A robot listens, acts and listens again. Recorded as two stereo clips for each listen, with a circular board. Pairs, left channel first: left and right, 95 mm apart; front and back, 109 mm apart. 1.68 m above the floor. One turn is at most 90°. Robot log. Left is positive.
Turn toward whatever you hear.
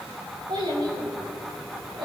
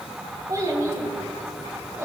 note: The child speaking: 115° right.
cmd yaw -90
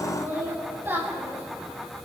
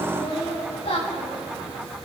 note: The child speaking is now 20° right.
cmd yaw -20
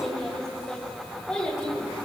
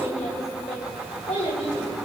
note: The child speaking is now 10° left.
cmd yaw +10
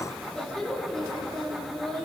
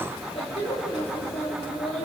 end: Found it: a child speaking, straight ahead, over 4 m away.